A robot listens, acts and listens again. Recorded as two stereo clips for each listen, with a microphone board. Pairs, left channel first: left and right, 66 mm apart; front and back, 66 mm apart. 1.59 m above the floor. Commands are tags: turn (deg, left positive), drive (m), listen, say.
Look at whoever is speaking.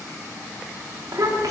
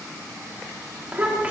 <turn deg="-110"/>
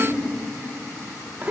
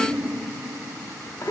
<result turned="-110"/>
<turn deg="-25"/>
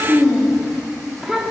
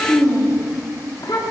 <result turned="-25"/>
<say>Facing the child speaking.</say>